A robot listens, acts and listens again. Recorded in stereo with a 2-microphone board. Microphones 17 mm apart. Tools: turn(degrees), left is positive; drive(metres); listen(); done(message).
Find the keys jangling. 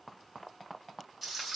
listen()
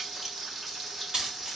turn(degrees=-50)
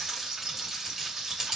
turn(degrees=-35)
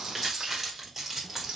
turn(degrees=-20)
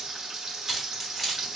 done("Facing the keys jangling, 1 to 2 m away.")